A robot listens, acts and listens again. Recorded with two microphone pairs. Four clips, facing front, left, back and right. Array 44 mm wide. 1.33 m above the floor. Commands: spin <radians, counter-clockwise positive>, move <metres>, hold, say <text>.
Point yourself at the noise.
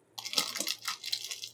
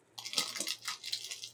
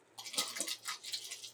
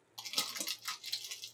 spin 0.26
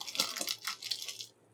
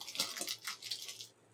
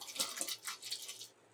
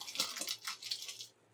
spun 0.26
say Facing the crumpling, under 1 m away.